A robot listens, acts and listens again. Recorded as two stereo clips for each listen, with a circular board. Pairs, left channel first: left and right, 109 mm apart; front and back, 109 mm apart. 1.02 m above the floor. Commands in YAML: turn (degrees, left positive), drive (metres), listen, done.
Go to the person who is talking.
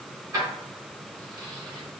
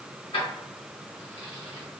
listen: true
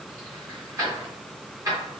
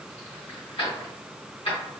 listen: true
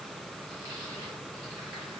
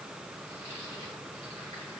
done: "I can't make out anyone speaking, only keys jangling."